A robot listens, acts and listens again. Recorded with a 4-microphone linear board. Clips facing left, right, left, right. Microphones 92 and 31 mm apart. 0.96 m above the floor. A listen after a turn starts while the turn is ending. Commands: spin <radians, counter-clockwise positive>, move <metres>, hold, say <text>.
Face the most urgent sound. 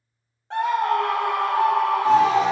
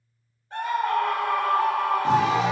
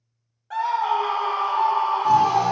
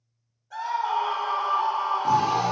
spin 1.22
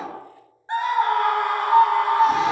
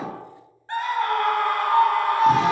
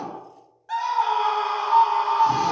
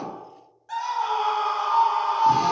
spin 0.35
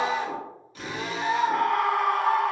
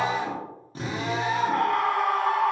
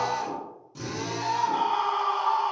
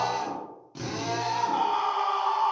say Found it: a scream, straight ahead.